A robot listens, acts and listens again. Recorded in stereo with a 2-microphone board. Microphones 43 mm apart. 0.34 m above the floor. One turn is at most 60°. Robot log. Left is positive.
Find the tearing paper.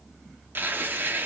note: The tearing paper: about 55° right or 125° right.
cmd yaw -55
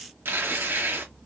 note: So it is at 70° right.
cmd yaw -60
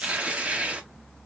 note: The tearing paper is now 35° right.
cmd yaw -35
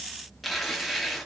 end: Found it: tearing paper, straight ahead.